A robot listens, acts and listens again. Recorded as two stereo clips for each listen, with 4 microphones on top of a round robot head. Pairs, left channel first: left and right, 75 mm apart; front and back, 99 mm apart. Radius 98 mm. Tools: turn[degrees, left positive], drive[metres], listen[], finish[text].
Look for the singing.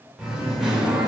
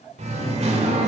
Thought: The singing: 175° right.
Action: turn[-175]
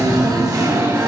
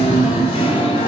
Thought: The singing is now 50° right.
Action: turn[-50]
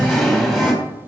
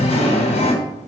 Action: finish[Found it: singing, straight ahead.]